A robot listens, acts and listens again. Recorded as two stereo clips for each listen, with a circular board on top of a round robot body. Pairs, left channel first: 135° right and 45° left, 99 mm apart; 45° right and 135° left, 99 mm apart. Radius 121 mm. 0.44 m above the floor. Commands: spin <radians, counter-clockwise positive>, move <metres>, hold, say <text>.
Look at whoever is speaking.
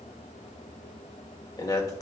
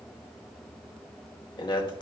spin -1.48
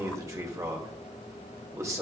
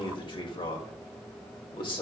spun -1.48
spin -0.17
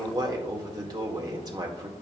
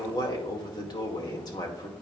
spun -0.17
say Facing the man speaking.